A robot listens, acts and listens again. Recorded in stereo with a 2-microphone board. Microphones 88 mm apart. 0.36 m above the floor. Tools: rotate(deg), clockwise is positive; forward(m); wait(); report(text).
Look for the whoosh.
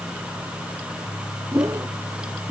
rotate(40)
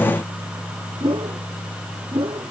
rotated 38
rotate(100)
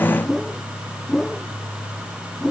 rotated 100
report("Found it: a whoosh, straight ahead.")